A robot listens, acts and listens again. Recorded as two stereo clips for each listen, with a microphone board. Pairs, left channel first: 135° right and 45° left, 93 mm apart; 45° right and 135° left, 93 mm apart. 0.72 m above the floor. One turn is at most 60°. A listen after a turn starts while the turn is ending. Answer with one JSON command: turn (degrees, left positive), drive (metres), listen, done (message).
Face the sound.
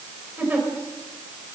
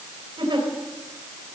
{"turn": 60}
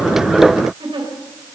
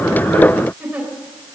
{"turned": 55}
{"turn": 60}
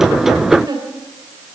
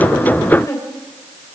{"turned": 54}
{"done": "Found it: a giggle, straight ahead."}